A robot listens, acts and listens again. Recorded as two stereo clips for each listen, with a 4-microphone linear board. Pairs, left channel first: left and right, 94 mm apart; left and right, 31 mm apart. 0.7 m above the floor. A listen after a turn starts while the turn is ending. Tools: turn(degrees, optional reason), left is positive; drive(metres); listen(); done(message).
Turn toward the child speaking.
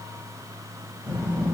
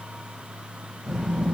turn(degrees=-15, reason="The child speaking: about 15° right or 165° right.")
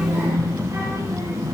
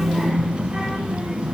turn(degrees=-35, reason="The child speaking: about 35° right or 145° right.")
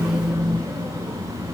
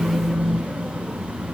turn(degrees=-110, reason="So it is at 110° right.")
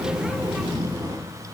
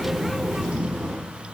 turn(degrees=-40, reason="The child speaking is now 40° right.")
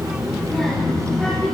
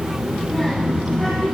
turn(degrees=10, reason="The child speaking is now 10° left.")
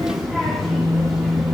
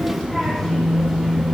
done("Facing the child speaking.")